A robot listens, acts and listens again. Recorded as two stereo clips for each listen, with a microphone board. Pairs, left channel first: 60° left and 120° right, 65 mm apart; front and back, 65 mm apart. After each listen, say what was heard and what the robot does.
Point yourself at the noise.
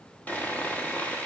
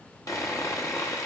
Facing the sawing, 1 to 2 m away.